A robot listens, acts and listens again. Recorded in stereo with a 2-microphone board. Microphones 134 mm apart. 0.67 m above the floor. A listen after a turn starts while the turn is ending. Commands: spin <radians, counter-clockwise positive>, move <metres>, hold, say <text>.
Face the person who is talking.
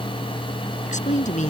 spin 1.31
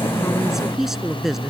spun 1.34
say Facing the woman speaking.